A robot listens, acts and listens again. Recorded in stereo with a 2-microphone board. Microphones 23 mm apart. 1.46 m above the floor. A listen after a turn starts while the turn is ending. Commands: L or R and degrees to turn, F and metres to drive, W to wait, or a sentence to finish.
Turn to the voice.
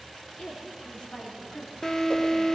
L90
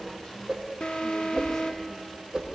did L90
W
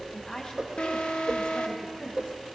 L70
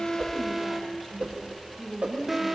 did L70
Facing the woman speaking.